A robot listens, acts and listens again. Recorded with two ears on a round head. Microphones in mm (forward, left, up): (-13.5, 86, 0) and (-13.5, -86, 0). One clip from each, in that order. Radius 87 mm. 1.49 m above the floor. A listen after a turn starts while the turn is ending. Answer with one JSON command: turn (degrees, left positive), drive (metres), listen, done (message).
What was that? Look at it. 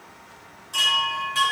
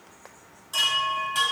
{"turn": -15}
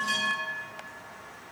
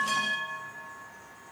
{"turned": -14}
{"turn": -150}
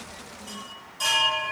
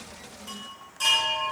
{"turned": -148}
{"done": "Found it: a chime, straight ahead."}